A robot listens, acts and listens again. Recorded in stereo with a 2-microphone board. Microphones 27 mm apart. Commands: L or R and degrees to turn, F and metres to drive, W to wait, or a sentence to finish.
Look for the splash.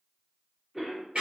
W
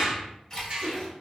L25
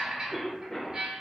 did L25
W
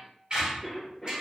I heard a splash, but can't make it out now. It was about straight ahead or 130° left.